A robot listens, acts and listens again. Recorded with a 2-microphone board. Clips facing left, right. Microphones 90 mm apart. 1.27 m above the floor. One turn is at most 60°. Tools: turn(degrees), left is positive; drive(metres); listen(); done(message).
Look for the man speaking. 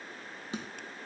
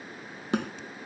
listen()
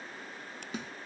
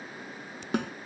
listen()
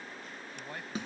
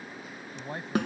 turn(degrees=-25)
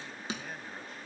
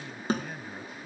listen()
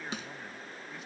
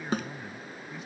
listen()
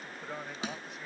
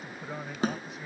done("Found it: a man speaking, straight ahead.")